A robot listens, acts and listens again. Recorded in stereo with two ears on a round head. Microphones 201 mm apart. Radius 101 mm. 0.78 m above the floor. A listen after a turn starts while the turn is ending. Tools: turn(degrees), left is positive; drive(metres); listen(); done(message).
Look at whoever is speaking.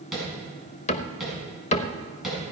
listen()
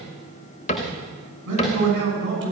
turn(degrees=-55)
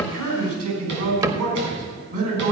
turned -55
turn(degrees=-70)
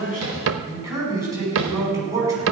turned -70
turn(degrees=-15)
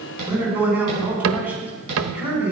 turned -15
turn(degrees=-10)
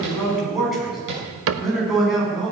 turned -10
done("Facing the man speaking, over 4 m away.")